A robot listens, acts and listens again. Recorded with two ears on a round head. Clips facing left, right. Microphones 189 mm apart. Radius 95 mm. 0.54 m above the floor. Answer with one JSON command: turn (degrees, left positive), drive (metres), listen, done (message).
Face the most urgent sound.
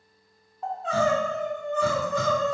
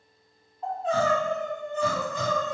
{"turn": 55}
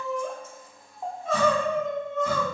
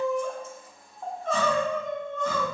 {"done": "Found it: crying, straight ahead, under 1 m away."}